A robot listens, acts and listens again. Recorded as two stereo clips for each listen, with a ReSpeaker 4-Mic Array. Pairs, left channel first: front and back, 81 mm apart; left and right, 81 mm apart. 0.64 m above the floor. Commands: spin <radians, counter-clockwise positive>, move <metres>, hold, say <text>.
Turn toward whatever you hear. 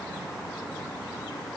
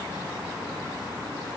hold
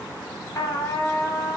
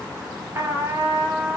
spin -0.70
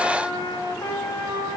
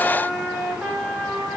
spin -0.26
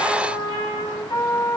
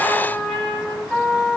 say Facing the trumpet.